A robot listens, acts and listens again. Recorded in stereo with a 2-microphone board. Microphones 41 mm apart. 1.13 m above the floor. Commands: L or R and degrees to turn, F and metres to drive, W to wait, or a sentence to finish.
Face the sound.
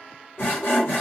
L70
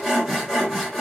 Found it: sawing, straight ahead.